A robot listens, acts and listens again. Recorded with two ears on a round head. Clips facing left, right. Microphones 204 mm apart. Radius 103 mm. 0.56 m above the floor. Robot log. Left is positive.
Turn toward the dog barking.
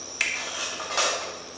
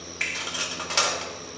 cmd idle
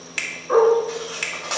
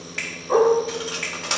cmd yaw +30
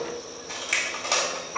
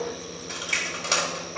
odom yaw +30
note: So it is at 110° left.
cmd yaw +110
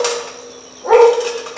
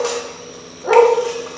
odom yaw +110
end: Found it: a dog barking, straight ahead, 2 to 4 m away.